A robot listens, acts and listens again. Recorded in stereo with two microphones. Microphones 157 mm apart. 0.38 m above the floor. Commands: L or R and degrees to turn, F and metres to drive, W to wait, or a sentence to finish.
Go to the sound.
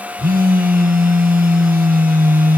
R65
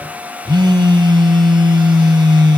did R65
R30
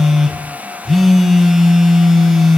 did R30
F1.0
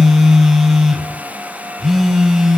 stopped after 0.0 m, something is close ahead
Blocked. The phone buzzing is further on, straight ahead.